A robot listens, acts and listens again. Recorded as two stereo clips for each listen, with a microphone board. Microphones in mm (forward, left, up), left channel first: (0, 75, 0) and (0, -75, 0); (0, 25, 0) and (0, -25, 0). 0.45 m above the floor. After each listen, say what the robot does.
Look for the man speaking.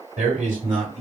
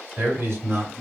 Turn 55° right.
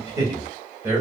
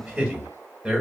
Turn 15° right.
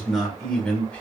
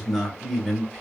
Turn 10° left.
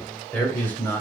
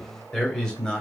Turn 15° left.
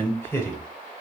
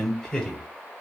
Turn 20° left.
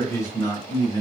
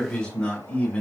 Turn 30° left.
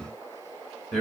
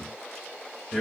Facing the man speaking.